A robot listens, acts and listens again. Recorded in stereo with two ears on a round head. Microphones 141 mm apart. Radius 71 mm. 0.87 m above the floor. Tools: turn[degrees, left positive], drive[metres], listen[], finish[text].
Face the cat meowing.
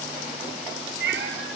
Action: turn[-90]
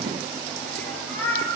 Thought: So it is at 15° left.
Action: turn[15]
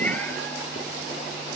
Thought: The cat meowing is now 10° left.
Action: turn[10]
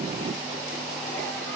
Action: listen[]
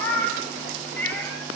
Thought: The cat meowing is now 10° left.
Action: turn[10]
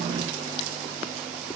Action: listen[]
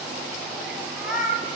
Action: finish[Found it: a cat meowing, straight ahead.]